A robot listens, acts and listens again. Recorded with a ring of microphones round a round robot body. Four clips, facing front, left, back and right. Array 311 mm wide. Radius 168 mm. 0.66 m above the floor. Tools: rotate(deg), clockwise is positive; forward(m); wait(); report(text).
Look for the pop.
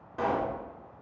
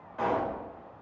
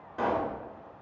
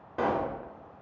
rotate(95)
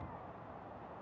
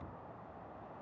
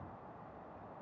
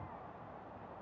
report("I heard a pop from this way, but can't make it out now.")